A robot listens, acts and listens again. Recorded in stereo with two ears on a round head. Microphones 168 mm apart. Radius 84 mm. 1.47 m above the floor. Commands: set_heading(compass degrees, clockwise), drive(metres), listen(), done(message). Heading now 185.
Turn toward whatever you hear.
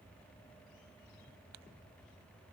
listen()
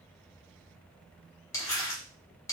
set_heading(170)
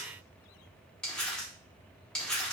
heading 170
done("Found it: crumpling, straight ahead, 1 to 2 m away.")